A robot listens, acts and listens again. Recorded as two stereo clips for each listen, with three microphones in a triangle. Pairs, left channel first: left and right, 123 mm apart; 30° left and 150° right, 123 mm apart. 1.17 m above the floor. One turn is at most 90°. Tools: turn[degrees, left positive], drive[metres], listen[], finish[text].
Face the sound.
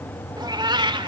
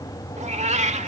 Thought: The cat meowing: 140° right.
Action: turn[-90]
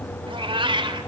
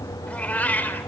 Thought: The cat meowing is now 45° right.
Action: turn[-45]
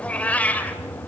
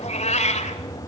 Thought: The cat meowing is now 10° left.
Action: turn[10]
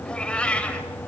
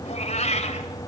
Thought: The cat meowing is now 10° left.
Action: turn[10]
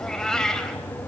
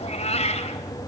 Action: finish[Facing the cat meowing, 2 to 4 m away.]